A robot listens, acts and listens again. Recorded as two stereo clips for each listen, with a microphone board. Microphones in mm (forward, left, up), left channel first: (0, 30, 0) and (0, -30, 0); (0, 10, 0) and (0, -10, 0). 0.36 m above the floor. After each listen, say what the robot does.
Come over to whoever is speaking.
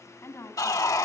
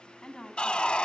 Turn 50° left.
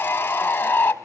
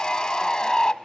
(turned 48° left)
Keep listening.
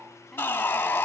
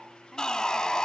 Keep listening.
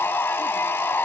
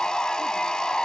I heard a woman speaking, but can't make it out now. It was about straight ahead or 85° left. I did not reach it.